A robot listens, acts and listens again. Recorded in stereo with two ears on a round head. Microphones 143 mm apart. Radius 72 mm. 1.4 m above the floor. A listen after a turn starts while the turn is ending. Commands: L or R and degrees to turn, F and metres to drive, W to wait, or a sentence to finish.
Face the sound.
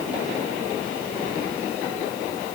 W
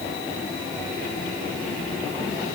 W
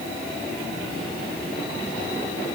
I can't make out anything.